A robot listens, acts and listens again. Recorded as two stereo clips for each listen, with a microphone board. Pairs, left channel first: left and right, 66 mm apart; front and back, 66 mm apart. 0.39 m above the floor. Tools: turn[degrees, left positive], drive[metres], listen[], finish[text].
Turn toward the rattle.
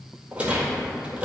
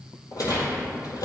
Thought: The rattle: 20° right.
Action: turn[-20]
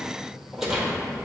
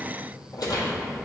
Action: finish[Found it: a rattle, straight ahead.]